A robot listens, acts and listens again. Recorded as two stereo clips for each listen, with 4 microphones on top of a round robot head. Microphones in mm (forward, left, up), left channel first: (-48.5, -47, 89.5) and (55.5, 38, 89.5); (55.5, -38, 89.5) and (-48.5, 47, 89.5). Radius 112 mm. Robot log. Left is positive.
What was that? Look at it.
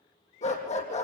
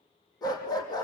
note: The dog barking: 100° right.
cmd yaw -100
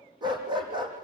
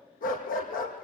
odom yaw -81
note: The dog barking is now 20° right.
cmd yaw -20
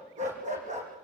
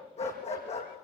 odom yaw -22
end: Facing the dog barking.